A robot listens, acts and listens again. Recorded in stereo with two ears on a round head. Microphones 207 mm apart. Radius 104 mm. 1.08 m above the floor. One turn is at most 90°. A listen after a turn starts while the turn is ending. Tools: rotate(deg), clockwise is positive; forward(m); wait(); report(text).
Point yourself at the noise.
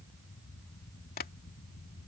rotate(-40)
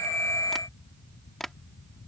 report("Facing the tapping.")